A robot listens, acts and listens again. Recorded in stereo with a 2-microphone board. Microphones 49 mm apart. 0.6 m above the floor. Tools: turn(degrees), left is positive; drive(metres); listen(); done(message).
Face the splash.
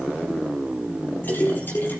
turn(degrees=40)
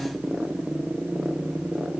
listen()
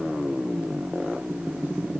done("I heard a splash, but can't make it out now. It was about straight ahead or 100° left.")